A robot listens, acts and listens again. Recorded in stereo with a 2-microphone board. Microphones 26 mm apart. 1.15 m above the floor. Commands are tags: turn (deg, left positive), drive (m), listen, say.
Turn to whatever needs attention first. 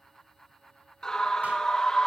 <turn deg="20"/>
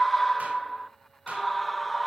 <say>Facing the scream, 1 to 2 m away.</say>